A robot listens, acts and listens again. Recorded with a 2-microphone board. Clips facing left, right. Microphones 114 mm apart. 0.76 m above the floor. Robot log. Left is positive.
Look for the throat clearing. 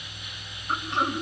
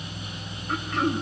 note: The throat clearing: about 30° left or 150° left.
cmd yaw +30
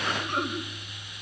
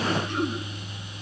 note: So it is at 120° left.
cmd yaw +120
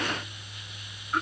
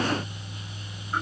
cmd idle
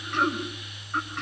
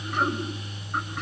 end: Found it: throat clearing, straight ahead.